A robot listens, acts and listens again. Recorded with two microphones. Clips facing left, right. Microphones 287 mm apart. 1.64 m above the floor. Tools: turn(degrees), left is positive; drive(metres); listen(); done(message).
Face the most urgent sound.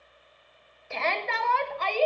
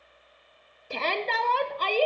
turn(degrees=-40)
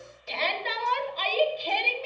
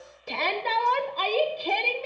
turn(degrees=-90)
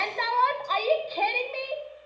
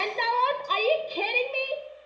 turn(degrees=-45)
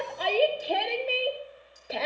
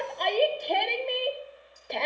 done("Facing the shout, under 1 m away.")